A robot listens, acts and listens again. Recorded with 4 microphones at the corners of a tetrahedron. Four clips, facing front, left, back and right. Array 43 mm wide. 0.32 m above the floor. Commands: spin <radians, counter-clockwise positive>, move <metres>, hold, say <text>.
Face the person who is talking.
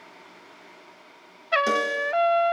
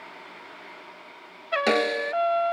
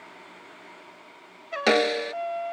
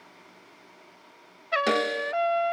hold
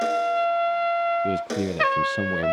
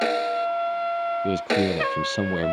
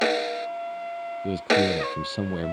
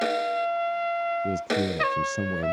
spin 1.31
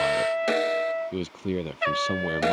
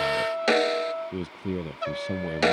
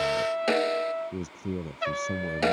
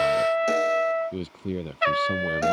say Facing the man speaking.